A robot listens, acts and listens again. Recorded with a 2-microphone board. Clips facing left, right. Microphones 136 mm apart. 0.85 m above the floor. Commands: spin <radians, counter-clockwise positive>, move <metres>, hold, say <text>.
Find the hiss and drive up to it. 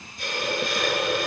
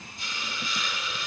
spin 1.22
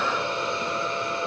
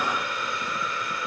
spin 0.52
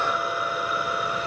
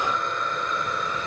move 1.0
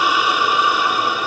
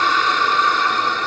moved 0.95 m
spin 0.17
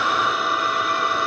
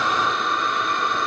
move 1.0
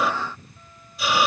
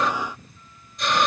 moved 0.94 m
move 1.0
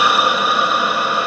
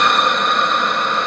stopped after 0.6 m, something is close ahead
spin 0.17
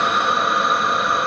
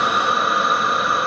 say Arrived at the hiss, straight ahead.